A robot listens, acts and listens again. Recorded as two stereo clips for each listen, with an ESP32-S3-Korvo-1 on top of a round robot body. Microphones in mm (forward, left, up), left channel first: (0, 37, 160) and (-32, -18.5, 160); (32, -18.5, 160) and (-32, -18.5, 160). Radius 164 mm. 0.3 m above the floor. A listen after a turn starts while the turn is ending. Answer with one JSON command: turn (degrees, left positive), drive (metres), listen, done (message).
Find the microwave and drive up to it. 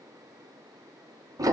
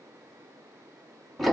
{"listen": true}
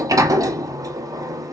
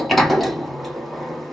{"listen": true}
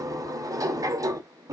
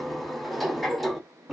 {"done": "I can't make out a microwave, only a sliding door."}